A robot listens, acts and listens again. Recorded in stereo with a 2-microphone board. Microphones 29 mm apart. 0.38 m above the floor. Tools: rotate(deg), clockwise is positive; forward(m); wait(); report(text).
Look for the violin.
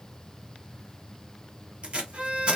rotate(45)
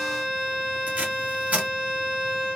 report("Found it: a violin, straight ahead.")